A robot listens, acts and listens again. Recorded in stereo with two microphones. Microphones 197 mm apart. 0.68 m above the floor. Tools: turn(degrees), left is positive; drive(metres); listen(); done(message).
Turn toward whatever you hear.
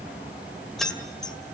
turn(degrees=30)
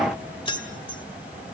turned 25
turn(degrees=155)
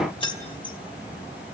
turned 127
turn(degrees=25)
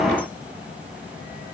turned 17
turn(degrees=10)
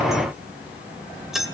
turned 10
done("Facing the keys jangling, 2 to 4 m away.")